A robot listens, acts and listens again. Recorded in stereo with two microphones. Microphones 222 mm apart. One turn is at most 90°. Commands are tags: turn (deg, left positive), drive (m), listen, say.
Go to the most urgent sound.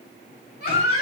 <turn deg="50"/>
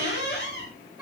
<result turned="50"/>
<drive m="1.0"/>
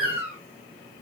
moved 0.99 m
<turn deg="-10"/>
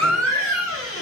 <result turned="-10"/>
<drive m="1.0"/>
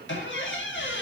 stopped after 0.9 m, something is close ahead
<listen/>
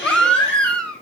<say>I am next to the baby crying.</say>